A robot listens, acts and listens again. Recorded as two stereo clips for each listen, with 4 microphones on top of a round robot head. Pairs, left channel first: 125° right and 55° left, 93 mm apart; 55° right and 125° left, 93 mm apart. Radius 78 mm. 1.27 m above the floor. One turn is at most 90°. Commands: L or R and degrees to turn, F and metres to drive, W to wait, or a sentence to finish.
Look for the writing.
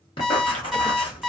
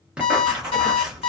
R90
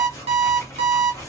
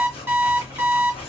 R65
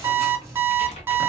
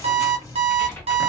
Facing the writing, 1 to 2 m away.